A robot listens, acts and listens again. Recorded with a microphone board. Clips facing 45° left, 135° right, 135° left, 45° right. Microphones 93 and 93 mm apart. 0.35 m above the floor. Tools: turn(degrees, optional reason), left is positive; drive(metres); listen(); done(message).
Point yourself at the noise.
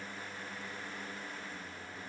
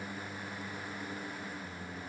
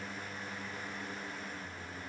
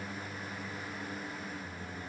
listen()
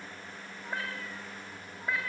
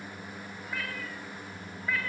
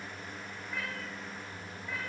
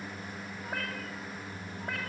turn(degrees=-25, reason="The cat meowing: 25° right.")
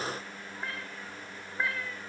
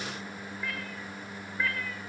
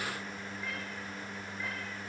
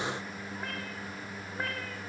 turn(degrees=-25, reason="The cat meowing is now 25° right.")
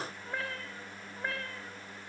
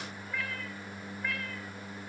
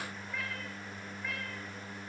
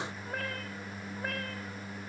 turn(degrees=-10, reason="The cat meowing is now 10° right.")
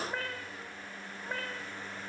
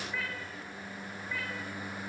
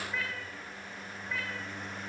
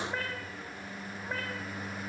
done("Facing the cat meowing.")